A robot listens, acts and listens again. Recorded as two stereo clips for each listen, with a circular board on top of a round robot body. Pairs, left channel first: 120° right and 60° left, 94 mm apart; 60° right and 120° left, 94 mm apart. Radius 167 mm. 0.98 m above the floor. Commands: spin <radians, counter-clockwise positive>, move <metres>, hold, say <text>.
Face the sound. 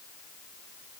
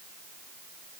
hold
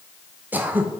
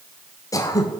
spin -0.17
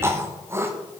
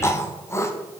say Facing the throat clearing, 1 to 2 m away.